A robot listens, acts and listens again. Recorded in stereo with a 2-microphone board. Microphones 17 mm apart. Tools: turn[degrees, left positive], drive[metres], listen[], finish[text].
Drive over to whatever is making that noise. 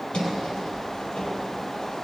Thought: The sliding door: about 65° left or 115° left.
Action: turn[65]
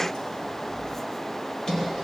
Thought: So it is at 50° left.
Action: turn[50]
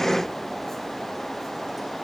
Action: listen[]
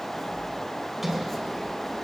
Thought: The sliding door is now 10° right.
Action: turn[-10]
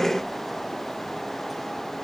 Action: listen[]
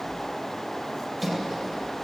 Action: drive[1.0]
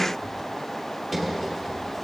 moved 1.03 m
Action: drive[1.0]
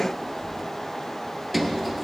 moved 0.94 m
Action: drive[1.0]
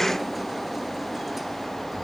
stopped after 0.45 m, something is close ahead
Action: finish[Arrived at the sliding door, straight ahead.]